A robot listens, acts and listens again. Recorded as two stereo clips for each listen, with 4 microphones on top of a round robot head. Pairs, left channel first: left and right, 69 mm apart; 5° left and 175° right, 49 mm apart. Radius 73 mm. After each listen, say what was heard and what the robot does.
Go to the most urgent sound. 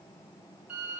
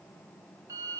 Keep listening.
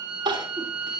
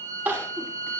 The crying: 120° right. Turn 120° right.
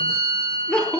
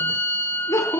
Drive 1.0 m forward.
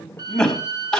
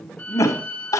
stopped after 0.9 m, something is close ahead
Blocked. The crying is further on, straight ahead.